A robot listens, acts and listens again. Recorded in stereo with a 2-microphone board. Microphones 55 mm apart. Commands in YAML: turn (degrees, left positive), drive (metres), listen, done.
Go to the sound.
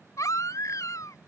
turn: 90
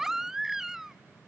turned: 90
drive: 1.0
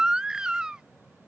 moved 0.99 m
turn: -15
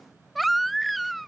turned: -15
drive: 1.0
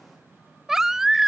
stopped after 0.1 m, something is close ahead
done: "Arrived at the baby crying, straight ahead."